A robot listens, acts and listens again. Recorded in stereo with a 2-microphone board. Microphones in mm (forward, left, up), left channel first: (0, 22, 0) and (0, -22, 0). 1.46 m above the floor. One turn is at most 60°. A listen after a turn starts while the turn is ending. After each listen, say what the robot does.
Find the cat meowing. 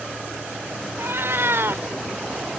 Turn 60° right.
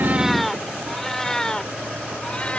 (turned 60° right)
Turn 20° left.
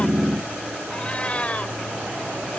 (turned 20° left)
Turn 30° left.
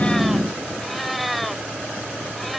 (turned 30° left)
Found it: a cat meowing, straight ahead.